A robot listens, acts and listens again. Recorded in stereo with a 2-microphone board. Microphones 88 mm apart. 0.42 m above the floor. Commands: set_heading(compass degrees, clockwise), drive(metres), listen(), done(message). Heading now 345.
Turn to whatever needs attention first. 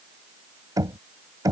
listen()
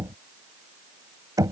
listen()
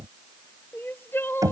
set_heading(320)
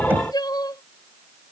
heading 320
set_heading(190)
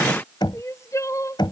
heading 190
set_heading(155)
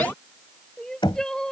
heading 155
set_heading(145)
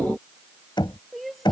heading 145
done("Found it: crying, straight ahead.")